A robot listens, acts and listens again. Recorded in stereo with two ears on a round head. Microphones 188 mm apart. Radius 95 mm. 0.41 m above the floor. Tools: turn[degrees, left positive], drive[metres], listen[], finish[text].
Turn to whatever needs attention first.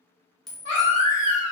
Thought: The baby crying: about 60° left or 120° left.
Action: turn[60]
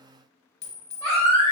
Thought: So it is at 15° left.
Action: turn[15]
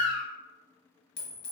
Action: finish[Facing the baby crying.]